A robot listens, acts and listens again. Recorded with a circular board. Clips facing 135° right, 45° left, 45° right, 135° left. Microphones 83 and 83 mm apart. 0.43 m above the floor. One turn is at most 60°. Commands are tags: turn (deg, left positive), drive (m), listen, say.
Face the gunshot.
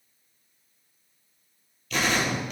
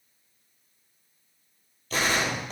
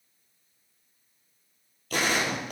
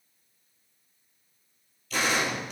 <say>Facing the gunshot, 1 to 2 m away.</say>